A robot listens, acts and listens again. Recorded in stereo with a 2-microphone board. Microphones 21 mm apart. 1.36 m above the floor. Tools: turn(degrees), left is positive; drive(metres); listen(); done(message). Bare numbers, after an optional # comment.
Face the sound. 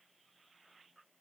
listen()
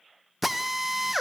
turn(-30)
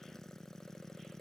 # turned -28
listen()
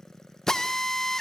# So it is at 25° left.
turn(25)
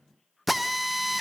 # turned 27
done("Facing the drill.")